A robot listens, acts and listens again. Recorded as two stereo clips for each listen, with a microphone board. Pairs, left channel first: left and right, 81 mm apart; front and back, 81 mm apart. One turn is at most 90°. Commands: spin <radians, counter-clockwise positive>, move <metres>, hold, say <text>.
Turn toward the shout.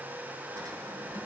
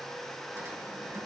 hold
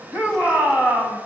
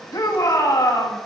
spin -0.44
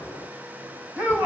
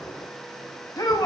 spin -0.44
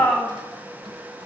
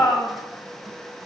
spin 0.17
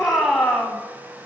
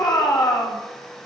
say Found it: a shout, straight ahead.